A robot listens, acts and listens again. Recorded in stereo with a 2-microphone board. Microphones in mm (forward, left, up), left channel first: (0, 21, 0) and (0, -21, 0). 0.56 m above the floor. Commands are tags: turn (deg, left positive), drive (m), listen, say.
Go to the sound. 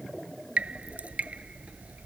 <turn deg="-35"/>
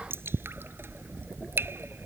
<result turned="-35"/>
<turn deg="-110"/>
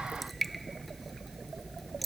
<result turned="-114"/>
<drive m="1.0"/>
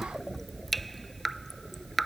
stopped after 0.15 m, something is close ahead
<say>Blocked. The dripping is further on, straight ahead.</say>